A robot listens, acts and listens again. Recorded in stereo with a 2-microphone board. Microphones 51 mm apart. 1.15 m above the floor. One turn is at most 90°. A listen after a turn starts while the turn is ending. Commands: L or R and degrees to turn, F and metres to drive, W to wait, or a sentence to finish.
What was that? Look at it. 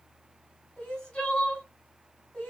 L20
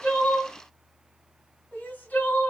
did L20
L90
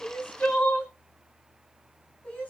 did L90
L25
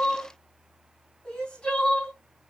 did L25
L15
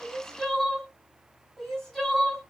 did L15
Facing the crying, 1 to 2 m away.